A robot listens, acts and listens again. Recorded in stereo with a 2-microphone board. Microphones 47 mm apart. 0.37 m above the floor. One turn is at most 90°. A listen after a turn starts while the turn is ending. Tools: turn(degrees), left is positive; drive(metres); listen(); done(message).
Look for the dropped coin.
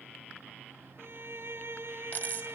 turn(degrees=40)
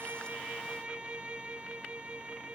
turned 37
listen()
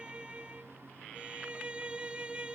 done("I heard a dropped coin, but can't make it out now. It was about 5° left or 105° left.")